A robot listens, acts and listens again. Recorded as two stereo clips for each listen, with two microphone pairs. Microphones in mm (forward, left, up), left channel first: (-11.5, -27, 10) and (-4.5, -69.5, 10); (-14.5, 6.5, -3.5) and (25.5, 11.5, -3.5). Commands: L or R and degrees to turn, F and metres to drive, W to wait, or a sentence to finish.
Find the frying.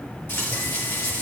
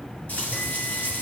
L135
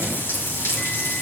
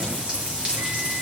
L65
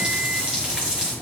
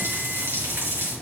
R10
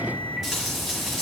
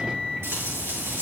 Found it: frying, straight ahead, over 4 m away.